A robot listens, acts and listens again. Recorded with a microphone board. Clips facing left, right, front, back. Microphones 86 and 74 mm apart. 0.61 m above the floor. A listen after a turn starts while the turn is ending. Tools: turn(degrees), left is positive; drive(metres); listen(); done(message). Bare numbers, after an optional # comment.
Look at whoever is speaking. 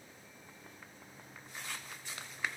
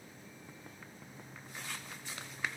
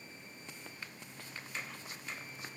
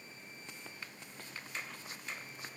listen()
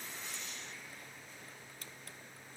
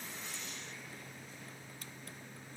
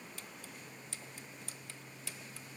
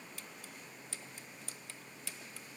listen()
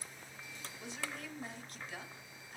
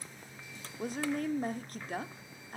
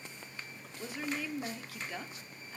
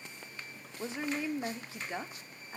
# The woman speaking: 120° right.
turn(-120)
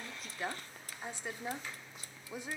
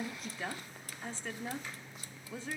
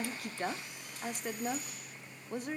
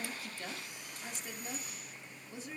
# The woman speaking is now 20° left.
turn(20)
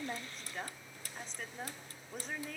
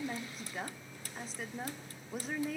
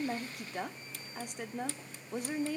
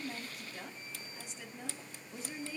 done("Found it: a woman speaking, straight ahead, 1 to 2 m away.")